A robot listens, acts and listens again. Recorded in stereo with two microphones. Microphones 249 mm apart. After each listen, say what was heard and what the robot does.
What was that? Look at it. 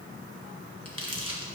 The crumpling: about 70° left or 110° left. Turn 70° left.
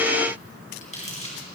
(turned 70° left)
So it is at 30° left. Turn 30° left.
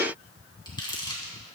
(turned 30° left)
The crumpling is now 20° left. Turn 20° left.
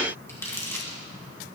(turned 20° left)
The crumpling is now 10° left. Turn 10° left.
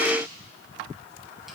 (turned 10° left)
Keep listening.
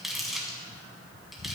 Facing the crumpling, 2 to 4 m away.